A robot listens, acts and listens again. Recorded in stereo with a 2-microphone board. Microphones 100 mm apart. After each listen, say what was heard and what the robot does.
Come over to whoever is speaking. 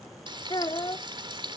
The child speaking: about 50° left or 130° left. Turn 50° left.
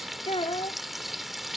So it is at 75° left. Turn 75° left.
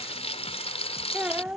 The child speaking is now 15° right. Turn 15° right.
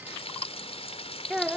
Drive 1.0 m forward.
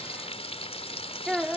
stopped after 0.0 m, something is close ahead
Blocked. The child speaking is further on, straight ahead.